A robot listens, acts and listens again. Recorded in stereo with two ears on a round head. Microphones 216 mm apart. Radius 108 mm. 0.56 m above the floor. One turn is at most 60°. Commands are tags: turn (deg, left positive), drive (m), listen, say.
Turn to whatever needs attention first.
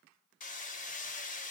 <listen/>
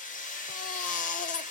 <turn deg="30"/>
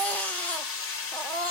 <say>Facing the baby crying.</say>